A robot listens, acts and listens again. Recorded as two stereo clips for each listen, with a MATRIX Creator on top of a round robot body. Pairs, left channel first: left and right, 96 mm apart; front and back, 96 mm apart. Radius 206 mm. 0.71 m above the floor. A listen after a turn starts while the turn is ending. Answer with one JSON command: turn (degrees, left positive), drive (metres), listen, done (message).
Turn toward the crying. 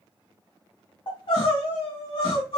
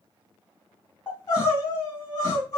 {"turn": 50}
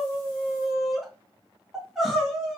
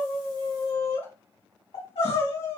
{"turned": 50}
{"done": "Found it: crying, straight ahead, 2 to 4 m away."}